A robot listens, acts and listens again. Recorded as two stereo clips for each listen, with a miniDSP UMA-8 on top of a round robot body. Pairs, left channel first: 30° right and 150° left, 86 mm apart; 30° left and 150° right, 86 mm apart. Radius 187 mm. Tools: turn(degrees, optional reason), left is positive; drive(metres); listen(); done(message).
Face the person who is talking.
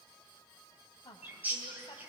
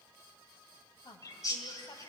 done("Facing the woman speaking.")